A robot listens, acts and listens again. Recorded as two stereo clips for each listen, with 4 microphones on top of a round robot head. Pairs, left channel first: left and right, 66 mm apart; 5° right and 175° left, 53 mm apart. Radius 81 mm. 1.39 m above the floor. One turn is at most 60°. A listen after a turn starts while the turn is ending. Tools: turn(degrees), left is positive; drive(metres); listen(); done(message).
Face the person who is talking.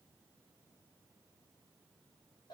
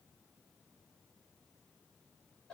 listen()
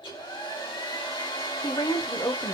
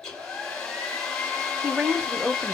turn(degrees=60)
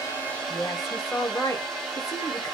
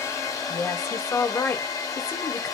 turn(degrees=40)
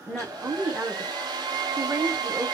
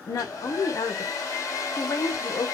turn(degrees=-20)
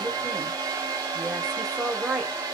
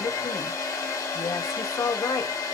done("Facing the woman speaking.")